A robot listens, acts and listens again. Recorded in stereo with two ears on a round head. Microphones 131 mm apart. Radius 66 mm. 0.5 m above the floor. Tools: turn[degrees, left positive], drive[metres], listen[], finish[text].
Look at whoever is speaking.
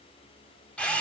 Action: listen[]
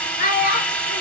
Thought: The child speaking: about 45° left or 135° left.
Action: turn[45]
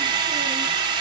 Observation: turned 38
Action: listen[]
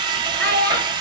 Thought: So it is at 10° left.
Action: turn[10]
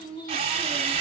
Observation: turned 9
Action: listen[]
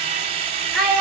Action: finish[Found it: a child speaking, straight ahead.]